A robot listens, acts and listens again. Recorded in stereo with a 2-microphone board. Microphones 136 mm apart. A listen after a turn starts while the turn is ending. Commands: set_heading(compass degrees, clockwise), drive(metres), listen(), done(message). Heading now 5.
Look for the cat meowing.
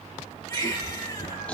set_heading(275)
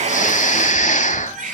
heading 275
listen()
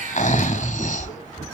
set_heading(305)
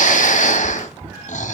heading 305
set_heading(320)
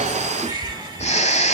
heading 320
done("Found it: a cat meowing, straight ahead, over 4 m away.")